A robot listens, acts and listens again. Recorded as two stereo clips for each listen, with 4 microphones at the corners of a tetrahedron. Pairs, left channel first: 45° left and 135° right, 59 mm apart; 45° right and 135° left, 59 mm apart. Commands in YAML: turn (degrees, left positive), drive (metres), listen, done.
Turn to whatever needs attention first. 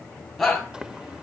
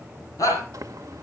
turn: -45
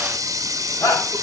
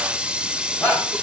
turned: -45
turn: 10
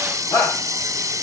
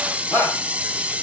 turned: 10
done: "Found it: a shout, straight ahead."